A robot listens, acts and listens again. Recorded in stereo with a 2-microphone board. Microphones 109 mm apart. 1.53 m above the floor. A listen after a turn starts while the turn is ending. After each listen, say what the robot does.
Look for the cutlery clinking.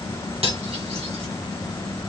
Turn 65° right.
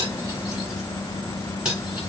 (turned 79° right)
Turn 10° right.
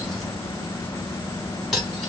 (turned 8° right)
Found it: cutlery clinking, straight ahead, 1 to 2 m away.